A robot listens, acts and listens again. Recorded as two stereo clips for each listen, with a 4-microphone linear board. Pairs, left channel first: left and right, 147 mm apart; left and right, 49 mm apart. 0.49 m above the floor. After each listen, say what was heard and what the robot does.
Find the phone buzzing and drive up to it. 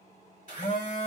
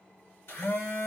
The phone buzzing: about 60° left or 120° left. Turn 60° left.
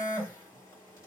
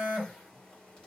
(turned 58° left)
So it is at 20° left. Turn 20° left.
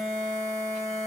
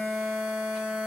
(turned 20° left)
Drive 1.0 m forward.
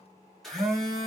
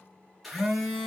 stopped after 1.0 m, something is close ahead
Arrived at the phone buzzing, straight ahead.